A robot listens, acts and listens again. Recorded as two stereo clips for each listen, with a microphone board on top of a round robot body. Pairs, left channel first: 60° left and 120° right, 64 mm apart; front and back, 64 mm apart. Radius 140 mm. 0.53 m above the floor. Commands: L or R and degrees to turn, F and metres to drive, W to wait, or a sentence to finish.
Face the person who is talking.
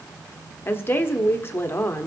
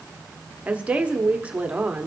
L110
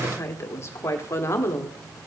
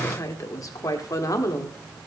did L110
L20
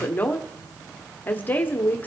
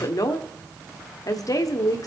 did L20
Found it: a woman speaking, straight ahead, 1 to 2 m away.